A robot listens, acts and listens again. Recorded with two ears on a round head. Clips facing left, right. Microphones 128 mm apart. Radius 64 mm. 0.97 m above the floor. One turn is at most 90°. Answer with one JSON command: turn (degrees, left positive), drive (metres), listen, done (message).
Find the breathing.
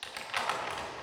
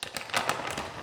{"listen": true}
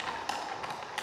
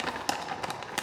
{"listen": true}
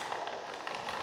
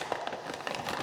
{"done": "I can't make out breathing, only crumpling."}